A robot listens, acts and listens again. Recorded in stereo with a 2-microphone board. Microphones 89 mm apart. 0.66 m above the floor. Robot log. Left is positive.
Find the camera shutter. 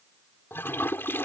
cmd idle
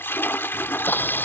note: The camera shutter: about 25° left or 155° left.
cmd yaw +25
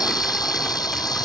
note: So it is at 130° left.
cmd yaw +130
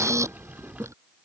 note: The camera shutter is now 35° right.
cmd yaw -35
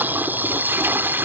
note: The camera shutter is now 20° right.
cmd yaw -20
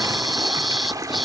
end: Found it: a camera shutter, straight ahead.